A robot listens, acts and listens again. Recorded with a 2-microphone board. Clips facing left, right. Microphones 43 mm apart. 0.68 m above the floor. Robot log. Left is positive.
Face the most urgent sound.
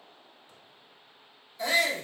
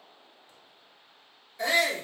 note: The shout: about 50° right or 130° right.
cmd yaw -50
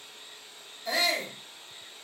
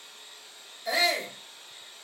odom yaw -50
note: So it is at 10° right.
cmd yaw -10
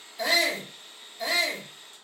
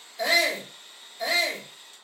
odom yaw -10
end: Found it: a shout, straight ahead, 1 to 2 m away.